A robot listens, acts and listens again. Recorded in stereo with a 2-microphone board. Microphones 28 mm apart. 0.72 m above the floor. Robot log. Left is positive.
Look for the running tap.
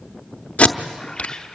cmd idle
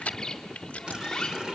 note: The running tap: about 30° right or 150° right.
cmd yaw -30
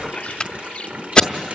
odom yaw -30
note: So it is at 120° right.
cmd yaw -120
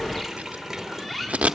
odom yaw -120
note: The running tap is now 15° right.
cmd yaw -15
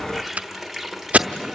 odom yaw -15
end: Facing the running tap, 1 to 2 m away.